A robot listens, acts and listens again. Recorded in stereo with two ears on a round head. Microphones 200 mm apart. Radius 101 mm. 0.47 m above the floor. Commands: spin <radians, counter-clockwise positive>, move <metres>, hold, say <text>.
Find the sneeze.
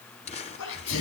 spin 1.31
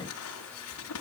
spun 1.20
hold
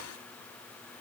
say I heard a sneeze, but can't make it out now. It was about 5° left or 40° left.